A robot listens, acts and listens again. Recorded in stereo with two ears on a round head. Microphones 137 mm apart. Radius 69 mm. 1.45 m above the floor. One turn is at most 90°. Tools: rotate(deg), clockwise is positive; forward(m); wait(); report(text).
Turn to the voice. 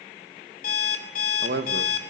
rotate(65)
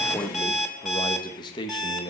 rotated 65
rotate(-30)
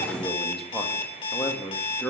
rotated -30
report("Found it: a man speaking, straight ahead, 2 to 4 m away.")